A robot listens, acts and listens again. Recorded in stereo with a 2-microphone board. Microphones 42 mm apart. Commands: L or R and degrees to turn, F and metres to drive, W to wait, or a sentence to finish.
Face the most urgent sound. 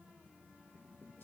W
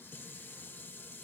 W
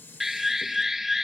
R30
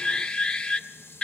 L25
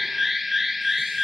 Found it: an alarm, straight ahead.